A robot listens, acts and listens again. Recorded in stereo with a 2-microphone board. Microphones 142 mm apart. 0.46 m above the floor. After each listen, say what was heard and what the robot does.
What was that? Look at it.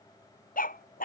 Turn 90° left.
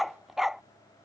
Facing the dog barking.